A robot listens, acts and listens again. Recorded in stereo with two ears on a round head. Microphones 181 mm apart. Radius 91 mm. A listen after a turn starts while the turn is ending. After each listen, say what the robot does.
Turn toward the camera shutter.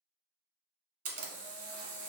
Turn 40° right.
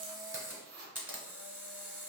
Turn 10° right.
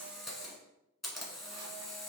Found it: a camera shutter, straight ahead, 1 to 2 m away.